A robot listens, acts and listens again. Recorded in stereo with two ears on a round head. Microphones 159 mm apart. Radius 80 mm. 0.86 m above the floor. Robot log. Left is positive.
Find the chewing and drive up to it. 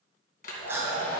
cmd yaw -30
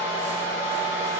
cmd idle
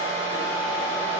cmd idle
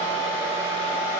end: I heard chewing, but can't make it out now. It was about 15° left or 135° right. I did not reach it.